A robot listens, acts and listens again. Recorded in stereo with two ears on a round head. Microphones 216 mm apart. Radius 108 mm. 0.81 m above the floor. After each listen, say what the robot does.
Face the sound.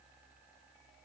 Keep listening.
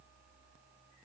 Keep listening.
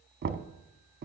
Turn 40° right.
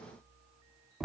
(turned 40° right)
Found it: knocking, straight ahead.